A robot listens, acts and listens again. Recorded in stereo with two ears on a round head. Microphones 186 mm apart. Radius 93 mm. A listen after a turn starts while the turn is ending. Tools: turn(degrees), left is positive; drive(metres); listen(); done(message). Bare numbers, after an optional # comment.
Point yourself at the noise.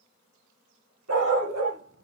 turn(-90)
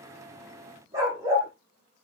# So it is at 15° right.
turn(-15)
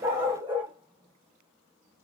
# The dog barking is now 10° right.
turn(-10)
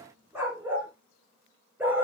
# The dog barking is now 10° right.
turn(-10)
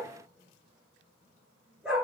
done("Found it: a dog barking, straight ahead.")